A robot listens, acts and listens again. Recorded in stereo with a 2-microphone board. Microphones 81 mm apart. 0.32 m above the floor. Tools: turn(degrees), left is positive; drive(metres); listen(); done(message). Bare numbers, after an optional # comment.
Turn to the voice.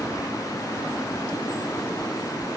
listen()
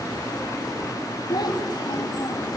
# The child speaking: about 55° left or 125° left.
turn(55)
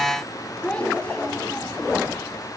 # So it is at 15° left.
turn(15)
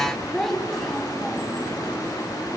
done("Found it: a child speaking, straight ahead.")